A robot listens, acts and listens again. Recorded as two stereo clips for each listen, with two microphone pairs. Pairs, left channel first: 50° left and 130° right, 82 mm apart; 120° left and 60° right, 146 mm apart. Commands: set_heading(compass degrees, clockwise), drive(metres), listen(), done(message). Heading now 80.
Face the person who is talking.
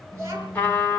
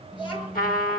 set_heading(260)
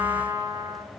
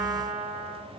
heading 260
listen()
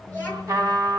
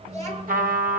set_heading(280)
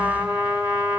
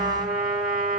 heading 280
listen()
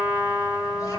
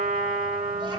listen()
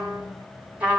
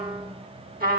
done("I heard a child speaking from this way, but can't make it out now.")